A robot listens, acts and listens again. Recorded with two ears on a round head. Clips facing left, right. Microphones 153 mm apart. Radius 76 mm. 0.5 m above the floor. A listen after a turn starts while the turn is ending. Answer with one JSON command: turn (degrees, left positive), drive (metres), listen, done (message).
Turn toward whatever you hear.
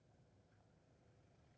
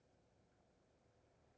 {"listen": true}
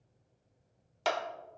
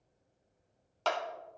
{"turn": 30}
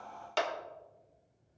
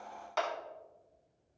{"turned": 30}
{"turn": 130}
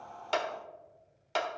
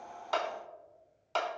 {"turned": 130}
{"turn": 15}
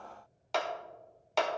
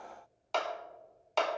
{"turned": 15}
{"done": "Found it: a clap, straight ahead."}